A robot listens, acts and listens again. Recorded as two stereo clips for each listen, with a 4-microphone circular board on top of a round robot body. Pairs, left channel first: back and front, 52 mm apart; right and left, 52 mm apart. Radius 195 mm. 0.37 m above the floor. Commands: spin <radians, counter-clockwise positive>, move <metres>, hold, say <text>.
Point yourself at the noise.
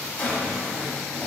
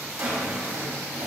spin 2.09
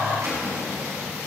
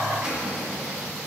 spin 0.35
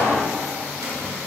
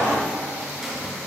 hold
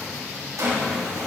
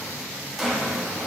say Found it: a drawer, straight ahead.